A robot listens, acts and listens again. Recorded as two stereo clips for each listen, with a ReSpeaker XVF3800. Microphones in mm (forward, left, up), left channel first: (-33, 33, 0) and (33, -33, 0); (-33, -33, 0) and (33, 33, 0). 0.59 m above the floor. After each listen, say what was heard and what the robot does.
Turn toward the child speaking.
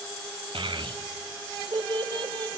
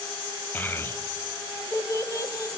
The child speaking: 85° right. Turn 85° right.
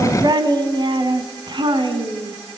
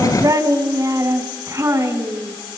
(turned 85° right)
The child speaking is now 15° right. Turn 15° right.
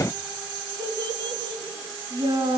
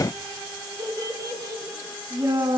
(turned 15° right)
Found it: a child speaking, straight ahead, over 4 m away.